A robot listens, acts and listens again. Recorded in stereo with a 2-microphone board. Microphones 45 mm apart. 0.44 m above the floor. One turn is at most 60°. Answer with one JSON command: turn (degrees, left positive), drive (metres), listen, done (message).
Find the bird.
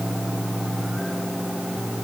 {"listen": true}
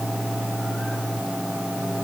{"listen": true}
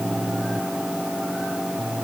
{"done": "I can't make out a bird."}